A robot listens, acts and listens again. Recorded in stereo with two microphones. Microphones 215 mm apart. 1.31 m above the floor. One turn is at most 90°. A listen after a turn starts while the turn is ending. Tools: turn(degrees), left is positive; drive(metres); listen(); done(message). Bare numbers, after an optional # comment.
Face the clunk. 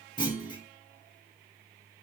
# The clunk: about 20° left or 160° left.
turn(20)
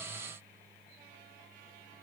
listen()
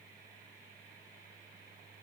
done("I heard a clunk, but can't make it out now. It was about straight ahead or 140° left.")